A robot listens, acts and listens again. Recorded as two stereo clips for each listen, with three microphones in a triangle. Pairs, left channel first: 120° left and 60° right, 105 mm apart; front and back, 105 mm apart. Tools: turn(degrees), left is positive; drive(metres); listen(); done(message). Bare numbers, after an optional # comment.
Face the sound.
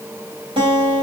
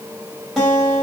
# The guitar: 90° right.
turn(-90)
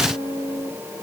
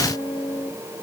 done("Found it: a guitar, straight ahead.")